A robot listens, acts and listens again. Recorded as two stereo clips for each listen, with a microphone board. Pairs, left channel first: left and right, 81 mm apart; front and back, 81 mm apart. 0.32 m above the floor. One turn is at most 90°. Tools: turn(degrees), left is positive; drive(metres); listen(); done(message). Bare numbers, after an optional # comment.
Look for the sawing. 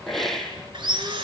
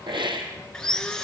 # The sawing: 80° right.
turn(-80)
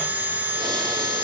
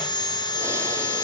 # The sawing is now 20° right.
turn(-20)
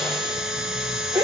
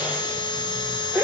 done("Found it: sawing, straight ahead, 2 to 4 m away.")